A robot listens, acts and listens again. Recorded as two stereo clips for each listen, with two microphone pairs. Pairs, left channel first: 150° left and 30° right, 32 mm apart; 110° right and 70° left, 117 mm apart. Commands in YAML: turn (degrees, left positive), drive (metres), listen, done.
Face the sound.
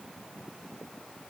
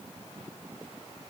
listen: true
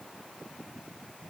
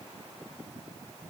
listen: true
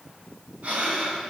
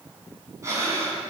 done: "Facing the breathing."